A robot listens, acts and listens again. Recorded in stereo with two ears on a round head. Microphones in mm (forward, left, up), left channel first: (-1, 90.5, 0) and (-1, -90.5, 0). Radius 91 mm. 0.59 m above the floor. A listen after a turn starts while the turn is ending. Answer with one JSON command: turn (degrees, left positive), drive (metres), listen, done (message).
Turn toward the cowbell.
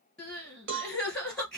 {"turn": -65}
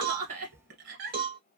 {"turn": -45}
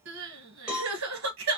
{"done": "Facing the cowbell, 1 to 2 m away."}